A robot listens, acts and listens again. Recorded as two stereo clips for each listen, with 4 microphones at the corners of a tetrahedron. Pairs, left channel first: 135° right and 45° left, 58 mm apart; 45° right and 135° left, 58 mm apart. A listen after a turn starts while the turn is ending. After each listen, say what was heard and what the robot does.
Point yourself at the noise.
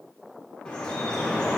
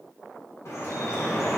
The dripping: 65° right. Turn 65° right.
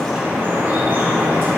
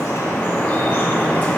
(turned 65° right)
Facing the dripping.